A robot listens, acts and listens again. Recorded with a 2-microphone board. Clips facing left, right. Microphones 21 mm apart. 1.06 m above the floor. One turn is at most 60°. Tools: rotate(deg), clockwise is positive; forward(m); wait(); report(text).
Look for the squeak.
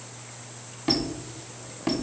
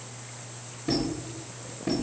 rotate(-60)
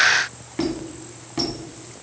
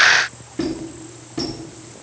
rotate(-25)
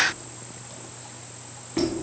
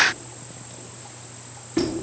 report("Facing the squeak.")